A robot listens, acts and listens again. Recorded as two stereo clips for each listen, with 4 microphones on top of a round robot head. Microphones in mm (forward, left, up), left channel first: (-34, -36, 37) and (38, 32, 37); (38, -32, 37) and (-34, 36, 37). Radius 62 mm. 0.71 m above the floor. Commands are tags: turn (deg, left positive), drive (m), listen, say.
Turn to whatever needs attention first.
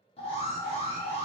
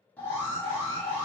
<turn deg="-120"/>
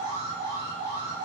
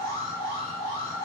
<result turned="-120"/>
<say>Found it: an alarm, straight ahead.</say>